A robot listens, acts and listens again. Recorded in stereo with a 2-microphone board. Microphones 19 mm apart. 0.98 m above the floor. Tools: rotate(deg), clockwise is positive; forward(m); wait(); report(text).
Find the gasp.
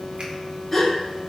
rotate(-15)
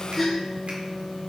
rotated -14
report("Found it: a gasp, straight ahead.")